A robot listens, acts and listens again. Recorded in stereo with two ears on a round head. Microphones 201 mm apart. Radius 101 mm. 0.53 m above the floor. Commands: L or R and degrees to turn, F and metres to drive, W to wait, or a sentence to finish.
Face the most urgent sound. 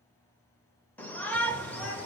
L30
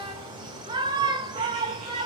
R20
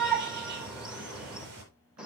Facing the shout.